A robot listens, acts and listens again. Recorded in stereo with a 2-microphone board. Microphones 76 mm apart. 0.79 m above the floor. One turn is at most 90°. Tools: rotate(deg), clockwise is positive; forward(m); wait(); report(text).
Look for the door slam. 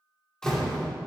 rotate(-30)
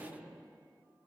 wait()
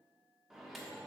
report("I heard a door slam, but can't make it out now. It was about 20° right or 140° left.")